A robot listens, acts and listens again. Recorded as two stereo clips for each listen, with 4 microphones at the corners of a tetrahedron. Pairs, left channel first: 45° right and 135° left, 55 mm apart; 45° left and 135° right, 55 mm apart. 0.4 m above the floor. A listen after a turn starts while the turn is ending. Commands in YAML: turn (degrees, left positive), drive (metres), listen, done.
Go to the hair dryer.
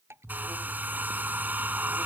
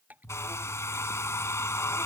turn: 75
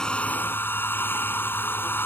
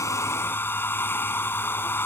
drive: 1.0
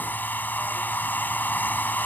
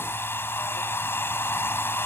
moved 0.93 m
drive: 1.0
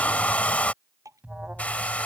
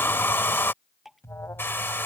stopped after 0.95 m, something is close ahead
turn: 10
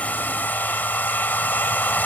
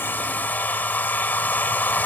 done: "Arrived at the hair dryer, straight ahead."